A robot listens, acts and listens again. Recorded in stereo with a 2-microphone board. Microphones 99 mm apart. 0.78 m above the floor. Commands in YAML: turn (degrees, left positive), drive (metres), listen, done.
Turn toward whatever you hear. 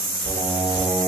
turn: -90
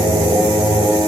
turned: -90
turn: -40
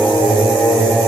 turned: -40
turn: -10
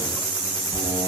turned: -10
done: "Facing the singing, 2 to 4 m away."